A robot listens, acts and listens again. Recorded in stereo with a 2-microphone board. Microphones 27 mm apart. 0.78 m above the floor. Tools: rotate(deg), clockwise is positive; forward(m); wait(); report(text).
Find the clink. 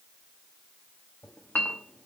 rotate(-70)
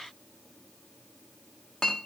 rotate(-25)
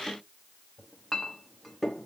report("Found it: a clink, straight ahead.")